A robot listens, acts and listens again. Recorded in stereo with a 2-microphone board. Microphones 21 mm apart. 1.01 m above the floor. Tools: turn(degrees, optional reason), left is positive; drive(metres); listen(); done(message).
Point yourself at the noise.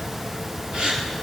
turn(degrees=-50, reason="The gasp: about 50° right or 130° right.")
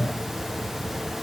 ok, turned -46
listen()
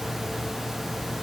done("I heard a gasp, but can't make it out now. It was about 5° right or 80° right.")